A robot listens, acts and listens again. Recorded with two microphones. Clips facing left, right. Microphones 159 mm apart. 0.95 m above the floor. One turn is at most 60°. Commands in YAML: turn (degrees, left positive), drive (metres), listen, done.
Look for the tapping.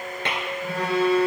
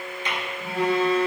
turn: 60
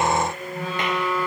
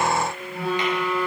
listen: true
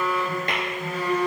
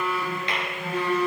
listen: true
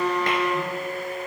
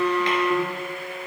done: "I heard tapping, but can't make it out now. It was about 5° left or 55° left."